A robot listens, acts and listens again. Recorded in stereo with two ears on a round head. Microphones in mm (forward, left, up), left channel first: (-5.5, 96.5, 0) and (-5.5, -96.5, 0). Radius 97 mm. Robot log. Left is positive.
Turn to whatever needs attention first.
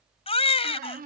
note: The baby crying: about 30° left or 150° left.
cmd yaw +30
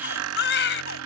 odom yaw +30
note: So it is at 120° left.
cmd yaw +120
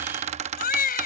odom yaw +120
note: The baby crying is now 45° left.
cmd yaw +45
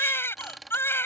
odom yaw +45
note: The baby crying is now 10° left.
cmd yaw +10
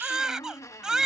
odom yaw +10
end: Facing the baby crying.